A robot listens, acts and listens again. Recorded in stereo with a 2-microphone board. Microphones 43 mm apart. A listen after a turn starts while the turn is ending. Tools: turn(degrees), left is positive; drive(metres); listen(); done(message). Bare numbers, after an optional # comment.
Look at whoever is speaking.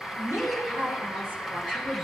# The woman speaking: about 50° right or 130° right.
turn(-50)
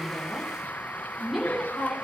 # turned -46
done("Facing the woman speaking.")